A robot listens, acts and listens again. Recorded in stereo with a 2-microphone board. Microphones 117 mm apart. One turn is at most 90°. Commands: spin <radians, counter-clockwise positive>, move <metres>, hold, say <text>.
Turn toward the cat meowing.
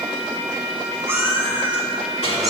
spin -0.52
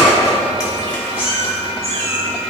spin 1.05
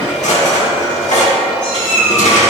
spin 0.17
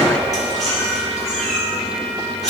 say Found it: a cat meowing, straight ahead.